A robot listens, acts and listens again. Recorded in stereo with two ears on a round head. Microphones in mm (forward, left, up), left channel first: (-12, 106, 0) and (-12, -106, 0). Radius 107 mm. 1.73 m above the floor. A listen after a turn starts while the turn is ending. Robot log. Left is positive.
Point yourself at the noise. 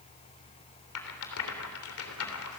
note: The rattle: about 65° left or 115° left.
cmd yaw +65
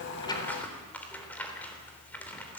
end: Facing the rattle, 2 to 4 m away.